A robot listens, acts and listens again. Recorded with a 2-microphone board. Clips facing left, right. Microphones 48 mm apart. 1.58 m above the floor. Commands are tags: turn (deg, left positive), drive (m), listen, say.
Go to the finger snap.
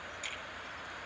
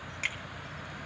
<turn deg="-90"/>
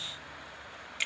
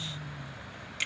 <drive m="1.0"/>
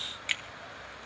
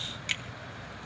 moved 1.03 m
<turn deg="10"/>
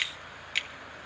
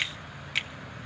<drive m="1.0"/>
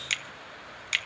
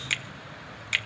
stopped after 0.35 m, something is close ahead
<turn deg="-10"/>
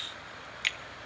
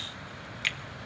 <say>I am next to the finger snap.</say>